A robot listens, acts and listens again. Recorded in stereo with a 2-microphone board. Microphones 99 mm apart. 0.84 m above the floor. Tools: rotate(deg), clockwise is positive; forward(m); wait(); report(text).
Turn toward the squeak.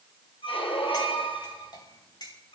rotate(-65)
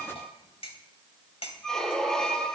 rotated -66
report("Found it: a squeak, straight ahead, 2 to 4 m away.")